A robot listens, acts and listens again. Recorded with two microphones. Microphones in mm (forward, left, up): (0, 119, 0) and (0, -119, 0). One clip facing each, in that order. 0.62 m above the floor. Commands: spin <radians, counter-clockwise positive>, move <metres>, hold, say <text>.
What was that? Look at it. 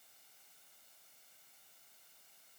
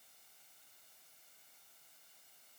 hold
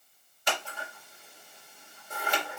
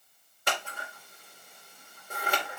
spin -1.05
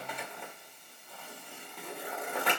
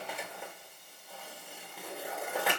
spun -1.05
say Found it: scissors, straight ahead, 2 to 4 m away.